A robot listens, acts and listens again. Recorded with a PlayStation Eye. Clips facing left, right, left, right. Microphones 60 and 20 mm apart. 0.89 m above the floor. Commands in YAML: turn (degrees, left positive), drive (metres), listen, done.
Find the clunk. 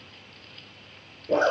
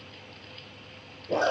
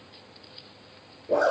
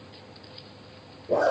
listen: true
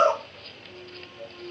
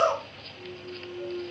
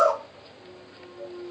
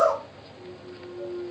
turn: 25
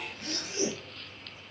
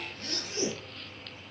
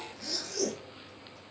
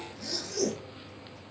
listen: true
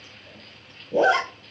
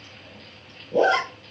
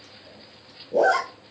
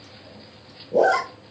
done: "I heard a clunk, but can't make it out now. It was about straight ahead or 130° left."